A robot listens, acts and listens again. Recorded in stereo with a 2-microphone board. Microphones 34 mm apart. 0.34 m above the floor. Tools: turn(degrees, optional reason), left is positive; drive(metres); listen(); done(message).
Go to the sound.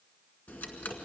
turn(degrees=65, reason="The ticking: about 65° left or 115° left.")
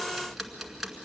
drive(metres=1.0)
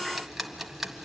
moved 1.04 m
turn(degrees=-10, reason="The ticking is now 10° right.")
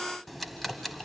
drive(metres=1.0)
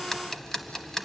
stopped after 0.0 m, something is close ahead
turn(degrees=10, reason="The ticking is now 10° left.")
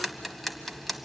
done("I am next to the ticking.")